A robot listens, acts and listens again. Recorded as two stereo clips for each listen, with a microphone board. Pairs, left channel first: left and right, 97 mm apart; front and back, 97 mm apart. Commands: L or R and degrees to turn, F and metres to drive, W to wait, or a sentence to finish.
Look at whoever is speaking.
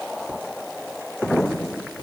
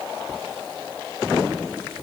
W
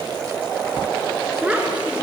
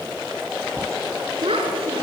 R165
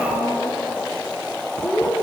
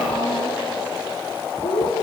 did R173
L10
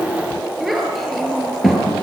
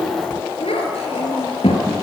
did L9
Found it: a child speaking, straight ahead, over 4 m away.